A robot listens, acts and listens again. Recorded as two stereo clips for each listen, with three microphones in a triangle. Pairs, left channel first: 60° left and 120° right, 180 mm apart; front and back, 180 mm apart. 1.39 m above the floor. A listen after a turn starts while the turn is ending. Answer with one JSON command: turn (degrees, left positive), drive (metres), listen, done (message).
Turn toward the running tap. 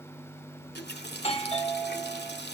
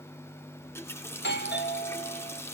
{"turn": 75}
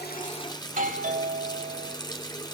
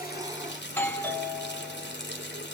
{"done": "Facing the running tap."}